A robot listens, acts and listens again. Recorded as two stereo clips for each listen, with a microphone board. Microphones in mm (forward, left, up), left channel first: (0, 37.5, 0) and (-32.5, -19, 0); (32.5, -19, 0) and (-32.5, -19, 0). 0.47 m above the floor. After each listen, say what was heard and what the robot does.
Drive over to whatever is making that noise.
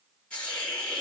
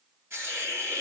The hiss: 130° left. Turn 130° left.
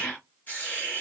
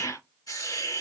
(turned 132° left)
Drive 1.0 m forward.
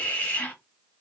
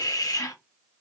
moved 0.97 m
Drive 1.0 m forward.
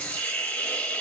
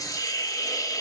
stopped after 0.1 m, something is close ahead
Arrived at the hiss, straight ahead.